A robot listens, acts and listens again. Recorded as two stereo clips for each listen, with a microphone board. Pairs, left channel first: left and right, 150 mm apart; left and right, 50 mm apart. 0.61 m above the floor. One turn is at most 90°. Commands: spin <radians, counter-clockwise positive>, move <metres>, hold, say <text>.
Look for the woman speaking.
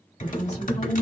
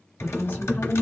spin 0.79
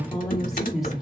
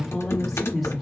say Facing the woman speaking, 1 to 2 m away.